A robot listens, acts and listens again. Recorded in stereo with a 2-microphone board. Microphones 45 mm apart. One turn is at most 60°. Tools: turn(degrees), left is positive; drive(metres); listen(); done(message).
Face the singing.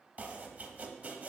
listen()
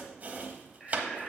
turn(degrees=30)
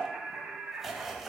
turn(degrees=-40)
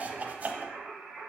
turn(degrees=-20)
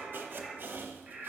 done("Found it: singing, straight ahead.")